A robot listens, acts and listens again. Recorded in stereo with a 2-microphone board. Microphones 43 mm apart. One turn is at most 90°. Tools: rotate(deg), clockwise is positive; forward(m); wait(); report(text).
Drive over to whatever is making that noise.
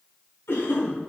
rotate(-65)
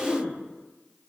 rotate(-30)
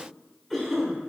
forward(1.0)
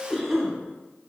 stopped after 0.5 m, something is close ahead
rotate(-10)
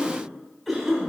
report("Blocked. The cough is further on, straight ahead.")